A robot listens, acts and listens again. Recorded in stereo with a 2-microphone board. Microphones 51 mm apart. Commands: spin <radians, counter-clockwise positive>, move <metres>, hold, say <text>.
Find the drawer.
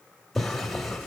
spin 0.52
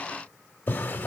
spin 2.44
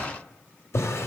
spin 1.13
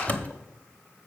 spin 0.52
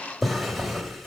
say Facing the drawer.